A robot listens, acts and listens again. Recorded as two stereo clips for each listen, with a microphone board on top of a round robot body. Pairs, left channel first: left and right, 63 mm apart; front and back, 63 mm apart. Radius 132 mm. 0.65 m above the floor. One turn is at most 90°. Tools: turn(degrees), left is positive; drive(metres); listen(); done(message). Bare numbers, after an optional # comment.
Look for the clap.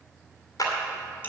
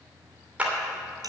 # The clap: 110° left.
turn(90)
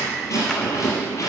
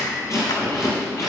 # Nothing new. It was at 20° left.
turn(20)
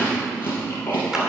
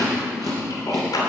listen()
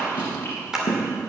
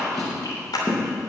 # The clap is now 10° right.
turn(-10)
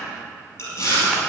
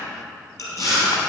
listen()
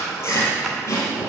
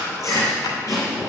listen()
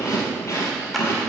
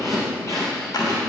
done("I heard a clap from this way, but can't make it out now.")